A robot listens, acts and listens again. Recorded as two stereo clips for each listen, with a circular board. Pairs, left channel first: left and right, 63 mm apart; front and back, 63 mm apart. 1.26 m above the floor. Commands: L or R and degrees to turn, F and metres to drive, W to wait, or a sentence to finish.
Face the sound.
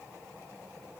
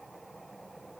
W
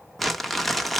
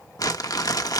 Facing the crumpling.